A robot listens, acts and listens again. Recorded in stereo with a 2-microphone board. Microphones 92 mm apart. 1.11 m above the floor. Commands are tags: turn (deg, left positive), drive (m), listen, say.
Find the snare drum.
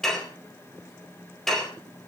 <listen/>
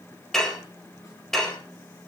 <listen/>
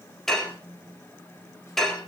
<say>I can't make out a snare drum, only dishes clattering.</say>